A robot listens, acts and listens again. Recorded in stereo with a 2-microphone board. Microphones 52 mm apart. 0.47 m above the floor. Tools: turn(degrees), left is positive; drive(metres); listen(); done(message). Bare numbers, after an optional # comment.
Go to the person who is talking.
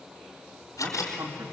# The man speaking: about 75° right or 105° right.
turn(-75)
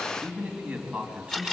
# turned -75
# So it is at 15° right.
turn(-15)
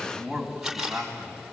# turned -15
drive(1.0)
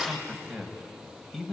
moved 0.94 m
drive(1.0)
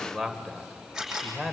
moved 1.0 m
drive(1.0)
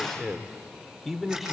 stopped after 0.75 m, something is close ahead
done("I am next to the man speaking.")